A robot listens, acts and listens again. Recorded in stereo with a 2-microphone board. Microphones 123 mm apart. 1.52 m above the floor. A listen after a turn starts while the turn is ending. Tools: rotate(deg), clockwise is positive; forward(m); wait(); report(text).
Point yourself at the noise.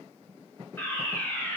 rotate(-15)
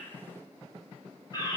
rotate(-150)
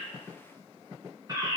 rotate(30)
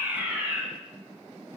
rotate(15)
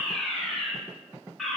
report("Facing the fire alarm.")